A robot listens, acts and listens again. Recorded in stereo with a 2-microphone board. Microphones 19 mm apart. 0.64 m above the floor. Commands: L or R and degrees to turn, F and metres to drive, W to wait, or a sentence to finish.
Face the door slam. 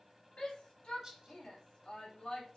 W
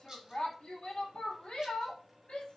W
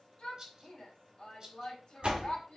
R70
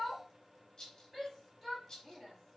W
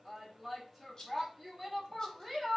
I heard a door slam, but can't make it out now. It was about straight ahead or 40° right.